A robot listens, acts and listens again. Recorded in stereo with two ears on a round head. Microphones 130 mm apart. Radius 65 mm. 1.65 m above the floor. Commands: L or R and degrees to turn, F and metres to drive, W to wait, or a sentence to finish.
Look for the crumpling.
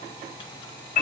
W
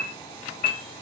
W
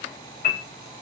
I can't make out crumpling to turn to.